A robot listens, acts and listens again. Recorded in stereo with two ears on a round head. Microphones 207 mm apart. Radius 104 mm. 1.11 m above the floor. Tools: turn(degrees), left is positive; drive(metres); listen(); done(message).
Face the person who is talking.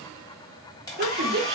turn(degrees=-50)
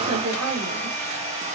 turn(degrees=-80)
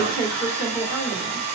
turn(degrees=-10)
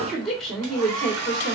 done("Facing the woman speaking, 1 to 2 m away.")